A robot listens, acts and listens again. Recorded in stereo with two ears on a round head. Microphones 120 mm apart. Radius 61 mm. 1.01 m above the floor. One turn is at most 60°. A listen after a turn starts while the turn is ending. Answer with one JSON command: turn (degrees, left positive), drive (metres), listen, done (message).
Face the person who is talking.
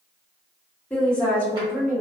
{"turn": 30}
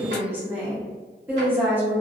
{"turn": -15}
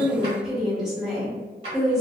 {"done": "Found it: a woman speaking, straight ahead."}